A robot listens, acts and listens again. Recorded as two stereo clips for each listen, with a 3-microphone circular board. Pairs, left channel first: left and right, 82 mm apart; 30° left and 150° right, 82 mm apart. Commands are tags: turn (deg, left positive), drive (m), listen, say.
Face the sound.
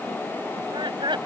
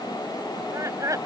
<turn deg="-105"/>
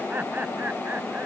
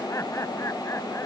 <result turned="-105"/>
<turn deg="-20"/>
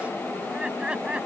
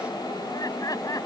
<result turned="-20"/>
<turn deg="-10"/>
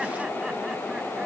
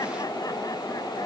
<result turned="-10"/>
<listen/>
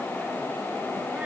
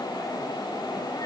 <listen/>
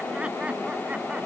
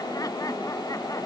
<say>Facing where the laughter came from. I can't hear it now.</say>